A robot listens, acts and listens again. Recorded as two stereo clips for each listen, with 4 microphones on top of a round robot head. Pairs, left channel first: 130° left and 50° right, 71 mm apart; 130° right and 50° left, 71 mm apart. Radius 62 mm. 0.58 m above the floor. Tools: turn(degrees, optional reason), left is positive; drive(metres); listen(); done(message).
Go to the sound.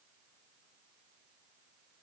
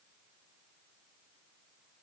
listen()
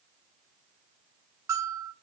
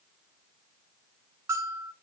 drive(metres=1.0)
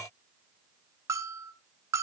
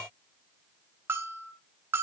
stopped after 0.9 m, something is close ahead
done("I am next to the bell.")